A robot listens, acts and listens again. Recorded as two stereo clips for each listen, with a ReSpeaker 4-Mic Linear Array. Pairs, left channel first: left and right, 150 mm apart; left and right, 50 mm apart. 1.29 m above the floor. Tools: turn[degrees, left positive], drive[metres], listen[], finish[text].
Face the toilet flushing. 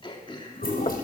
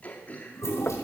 Action: turn[90]
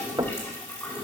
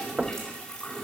Thought: So it is at 20° left.
Action: turn[20]
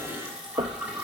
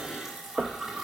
Action: finish[Facing the toilet flushing.]